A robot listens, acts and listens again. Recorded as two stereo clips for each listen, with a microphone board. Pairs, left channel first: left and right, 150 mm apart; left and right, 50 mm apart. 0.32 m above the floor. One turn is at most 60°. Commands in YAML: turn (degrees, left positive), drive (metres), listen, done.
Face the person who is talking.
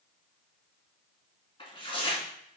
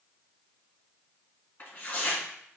listen: true
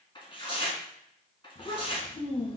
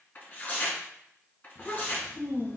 turn: 40
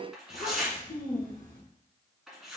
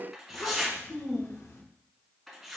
turn: 60
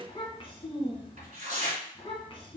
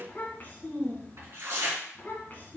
turn: 40
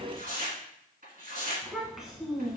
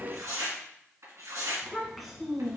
done: "Found it: a child speaking, straight ahead."